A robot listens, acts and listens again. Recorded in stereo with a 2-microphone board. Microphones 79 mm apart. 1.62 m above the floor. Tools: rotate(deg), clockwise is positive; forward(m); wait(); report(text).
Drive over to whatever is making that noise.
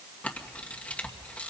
rotate(-15)
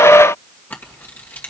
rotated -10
rotate(-155)
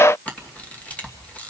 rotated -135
rotate(-20)
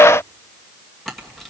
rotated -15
forward(1.0)
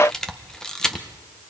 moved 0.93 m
rotate(-10)
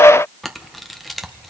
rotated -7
forward(1.0)
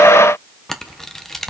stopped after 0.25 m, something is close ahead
report("I am next to the camera shutter.")